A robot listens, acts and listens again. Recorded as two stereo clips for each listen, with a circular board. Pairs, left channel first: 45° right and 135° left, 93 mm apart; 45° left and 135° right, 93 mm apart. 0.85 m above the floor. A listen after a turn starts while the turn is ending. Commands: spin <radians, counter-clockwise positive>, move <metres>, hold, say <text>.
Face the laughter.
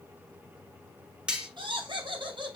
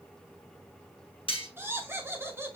spin 2.79
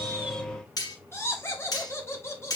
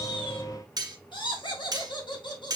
spin 0.26
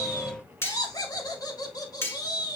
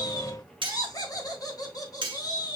say Facing the laughter.